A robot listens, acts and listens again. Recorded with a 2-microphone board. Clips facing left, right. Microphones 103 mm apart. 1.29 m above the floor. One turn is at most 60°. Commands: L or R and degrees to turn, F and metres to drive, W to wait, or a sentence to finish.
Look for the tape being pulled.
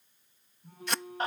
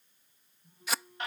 R30
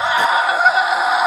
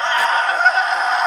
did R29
W
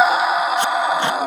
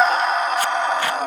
W
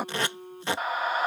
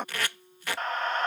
L25
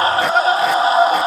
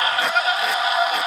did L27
W
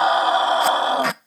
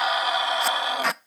Found it: tape being pulled, straight ahead.